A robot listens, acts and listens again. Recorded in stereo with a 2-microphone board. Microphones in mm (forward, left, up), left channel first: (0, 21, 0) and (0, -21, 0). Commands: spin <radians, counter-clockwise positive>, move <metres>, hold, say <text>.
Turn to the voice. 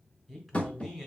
spin 0.52
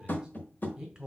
spin -0.26
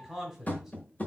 say Facing the man speaking, 1 to 2 m away.